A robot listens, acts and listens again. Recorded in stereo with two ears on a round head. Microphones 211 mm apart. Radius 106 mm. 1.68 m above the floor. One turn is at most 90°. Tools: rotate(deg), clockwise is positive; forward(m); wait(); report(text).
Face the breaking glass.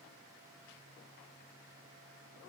wait()
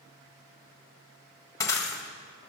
rotate(-30)
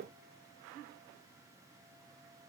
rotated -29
wait()
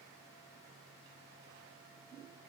report("I heard breaking glass, but can't make it out now. It was about 15° right or 140° left.")